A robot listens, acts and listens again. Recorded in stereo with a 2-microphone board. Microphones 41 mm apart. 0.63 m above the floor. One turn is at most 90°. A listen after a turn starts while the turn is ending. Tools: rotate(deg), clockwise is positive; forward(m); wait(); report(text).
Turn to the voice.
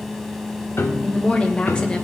rotate(-25)
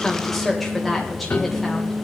report("Facing the woman speaking, 2 to 4 m away.")